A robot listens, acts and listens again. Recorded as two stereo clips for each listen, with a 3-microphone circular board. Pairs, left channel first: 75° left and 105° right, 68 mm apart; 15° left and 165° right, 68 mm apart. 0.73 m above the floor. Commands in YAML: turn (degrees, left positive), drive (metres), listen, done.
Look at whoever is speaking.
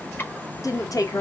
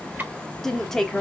turn: 95
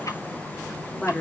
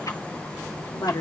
done: "Found it: a woman speaking, straight ahead, 1 to 2 m away."